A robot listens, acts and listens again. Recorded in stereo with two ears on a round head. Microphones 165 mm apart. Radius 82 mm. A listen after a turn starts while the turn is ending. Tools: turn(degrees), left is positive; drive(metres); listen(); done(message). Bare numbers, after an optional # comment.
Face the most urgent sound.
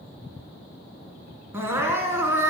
turn(-30)
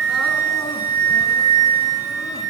listen()
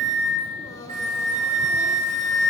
listen()
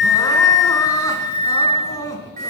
# So it is at 20° left.
turn(20)
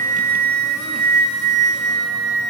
listen()
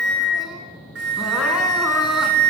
listen()
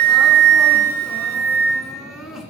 done("Found it: crying, straight ahead, 1 to 2 m away.")